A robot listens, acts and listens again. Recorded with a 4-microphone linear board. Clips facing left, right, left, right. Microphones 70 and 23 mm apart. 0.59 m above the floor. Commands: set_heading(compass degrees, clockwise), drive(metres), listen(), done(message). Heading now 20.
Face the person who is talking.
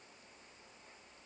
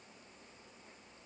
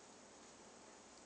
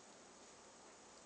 listen()
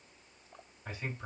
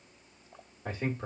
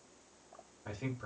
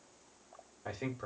set_heading(75)
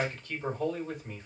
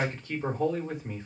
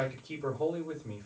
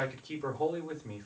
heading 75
set_heading(95)
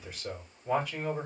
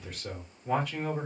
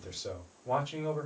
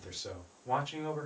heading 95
done("Found it: a man speaking, straight ahead.")